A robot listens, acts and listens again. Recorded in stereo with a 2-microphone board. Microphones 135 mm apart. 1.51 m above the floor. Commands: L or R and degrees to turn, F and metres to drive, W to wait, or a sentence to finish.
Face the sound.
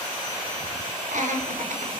R70
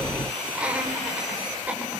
R15
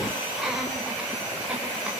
Found it: laughter, straight ahead.